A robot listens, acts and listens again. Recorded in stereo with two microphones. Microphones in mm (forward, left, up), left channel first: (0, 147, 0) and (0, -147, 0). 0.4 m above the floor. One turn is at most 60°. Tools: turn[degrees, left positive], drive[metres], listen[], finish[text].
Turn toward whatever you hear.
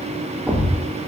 Action: turn[-30]
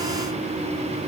Action: listen[]
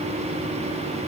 Action: finish[I heard a thud, but can't make it out now. It was about 25° left or 145° right.]